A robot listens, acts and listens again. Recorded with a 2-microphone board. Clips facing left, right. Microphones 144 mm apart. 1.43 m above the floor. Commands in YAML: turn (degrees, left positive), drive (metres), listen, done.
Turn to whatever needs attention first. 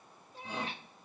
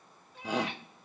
turn: -90
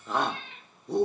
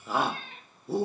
done: "Facing the shout."